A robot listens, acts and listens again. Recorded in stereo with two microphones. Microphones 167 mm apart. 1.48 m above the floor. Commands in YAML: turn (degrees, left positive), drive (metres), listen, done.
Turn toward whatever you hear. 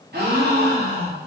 turn: -65
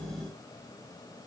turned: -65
listen: true
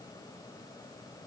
done: "I heard a gasp, but can't make it out now. It was about straight ahead or 50° right."